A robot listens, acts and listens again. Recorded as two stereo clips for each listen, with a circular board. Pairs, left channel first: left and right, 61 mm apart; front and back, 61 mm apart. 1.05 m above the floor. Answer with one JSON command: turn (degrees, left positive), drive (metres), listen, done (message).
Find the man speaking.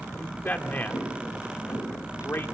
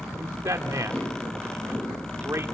{"turn": 140}
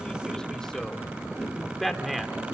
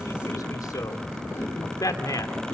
{"done": "Facing the man speaking."}